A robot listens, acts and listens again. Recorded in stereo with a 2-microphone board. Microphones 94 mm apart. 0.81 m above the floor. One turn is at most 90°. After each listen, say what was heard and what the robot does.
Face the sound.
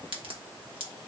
Turn 90° right.
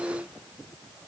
Facing where the crack came from. I can't hear it now.